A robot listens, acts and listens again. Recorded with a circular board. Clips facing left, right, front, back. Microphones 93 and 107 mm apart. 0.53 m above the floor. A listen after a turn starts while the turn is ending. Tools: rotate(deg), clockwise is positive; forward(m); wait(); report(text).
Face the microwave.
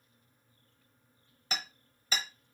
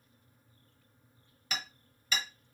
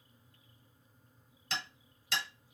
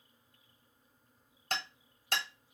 wait()
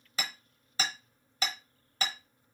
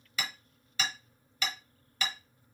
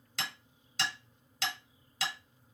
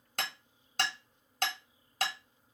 wait()
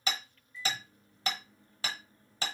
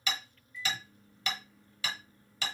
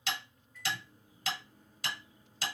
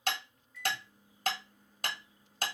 rotate(-35)
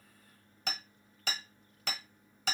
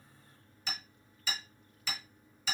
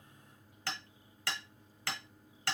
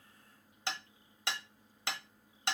report("Facing the microwave, 1 to 2 m away.")